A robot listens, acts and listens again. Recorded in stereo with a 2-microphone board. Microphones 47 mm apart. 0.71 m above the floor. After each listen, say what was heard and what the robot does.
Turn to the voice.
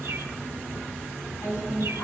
Turn 90° left.
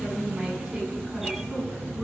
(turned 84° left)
Facing the woman speaking, over 4 m away.